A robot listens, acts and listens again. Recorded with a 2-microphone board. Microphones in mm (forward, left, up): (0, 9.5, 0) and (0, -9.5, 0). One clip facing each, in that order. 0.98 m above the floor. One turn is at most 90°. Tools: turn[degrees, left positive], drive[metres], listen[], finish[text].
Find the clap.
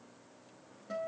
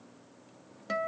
Action: listen[]
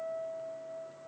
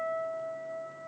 Action: listen[]
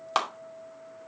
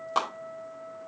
Thought: The clap: about 45° left or 135° left.
Action: turn[45]
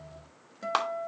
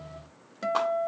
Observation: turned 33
Thought: So it is at 100° left.
Action: turn[90]
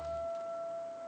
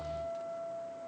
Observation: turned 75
Thought: Nothing new. It was at 25° left.
Action: turn[25]
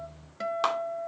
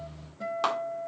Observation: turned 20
Action: listen[]
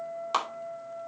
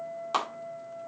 Action: finish[Facing the clap, 2 to 4 m away.]